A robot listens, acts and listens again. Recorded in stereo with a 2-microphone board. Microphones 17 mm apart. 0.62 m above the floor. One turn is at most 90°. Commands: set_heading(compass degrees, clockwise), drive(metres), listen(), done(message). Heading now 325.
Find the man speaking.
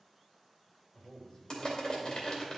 set_heading(260)
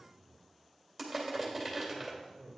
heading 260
set_heading(200)
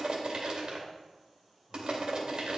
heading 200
listen()
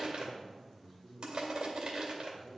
set_heading(185)
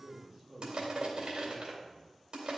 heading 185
done("Found it: a man speaking, straight ahead.")